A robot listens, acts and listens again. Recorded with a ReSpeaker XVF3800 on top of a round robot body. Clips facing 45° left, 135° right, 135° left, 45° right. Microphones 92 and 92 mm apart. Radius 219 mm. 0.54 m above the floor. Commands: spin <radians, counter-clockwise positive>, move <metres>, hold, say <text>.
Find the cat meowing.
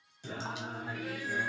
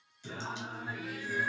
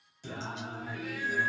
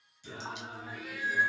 spin 0.61
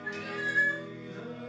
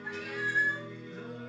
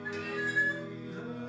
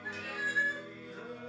spin -0.17
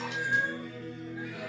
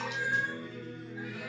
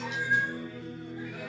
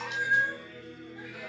spin -0.26
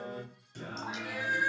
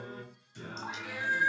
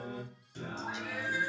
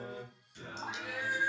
spin -0.35
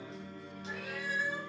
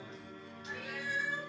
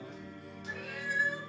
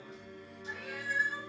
say Facing the cat meowing.